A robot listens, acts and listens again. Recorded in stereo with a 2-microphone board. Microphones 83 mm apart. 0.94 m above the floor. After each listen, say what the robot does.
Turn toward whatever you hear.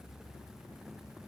Keep listening.
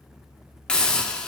Turn 30° left.
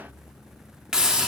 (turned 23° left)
Turn 10° right.
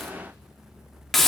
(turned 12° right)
Found it: a hiss, straight ahead, under 1 m away.